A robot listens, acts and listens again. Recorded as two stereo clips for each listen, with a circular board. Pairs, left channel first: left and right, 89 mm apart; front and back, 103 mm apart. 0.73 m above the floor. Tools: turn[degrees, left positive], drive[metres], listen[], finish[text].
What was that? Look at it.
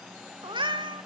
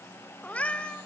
Thought: The cat meowing: 80° right.
Action: turn[-80]
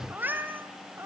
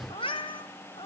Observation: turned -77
Thought: The cat meowing is now 30° right.
Action: turn[-30]
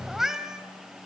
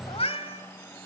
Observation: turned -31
Action: finish[Facing the cat meowing.]